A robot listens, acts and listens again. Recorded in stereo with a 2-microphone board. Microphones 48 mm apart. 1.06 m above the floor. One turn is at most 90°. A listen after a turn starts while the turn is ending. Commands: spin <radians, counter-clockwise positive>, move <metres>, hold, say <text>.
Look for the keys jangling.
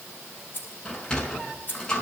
spin 0.70
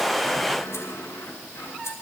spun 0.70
hold
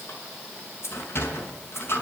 spin 1.57
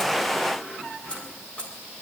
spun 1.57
spin 0.44
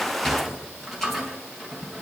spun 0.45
hold
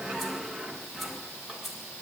say Found it: keys jangling, straight ahead, over 4 m away.